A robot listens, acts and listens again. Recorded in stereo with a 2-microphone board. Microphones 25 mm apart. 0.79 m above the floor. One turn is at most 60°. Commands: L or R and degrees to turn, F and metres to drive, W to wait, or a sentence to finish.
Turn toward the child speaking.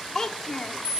L20
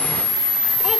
W
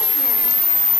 W
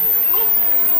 I heard a child speaking, but can't make it out now. It was about straight ahead or 140° left.